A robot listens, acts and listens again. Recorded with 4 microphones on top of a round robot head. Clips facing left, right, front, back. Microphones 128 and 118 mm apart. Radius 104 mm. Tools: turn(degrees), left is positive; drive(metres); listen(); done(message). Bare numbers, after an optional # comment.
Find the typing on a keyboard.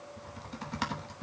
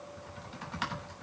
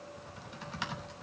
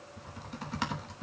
# The typing on a keyboard: 140° left.
turn(140)
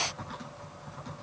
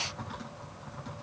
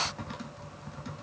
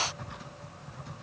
done("Facing the typing on a keyboard.")